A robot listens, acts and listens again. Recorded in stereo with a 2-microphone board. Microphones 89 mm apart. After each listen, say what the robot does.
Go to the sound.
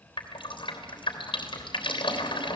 Turn 70° left.
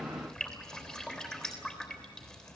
Turn 10° left.
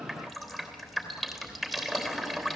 Drive 1.0 m forward.
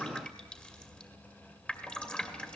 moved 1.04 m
Turn 15° left.
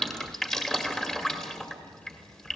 Turn 10° left.
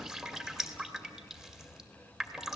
Drive 1.0 m forward.
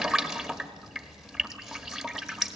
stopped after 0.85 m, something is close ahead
Arrived at the dripping, straight ahead.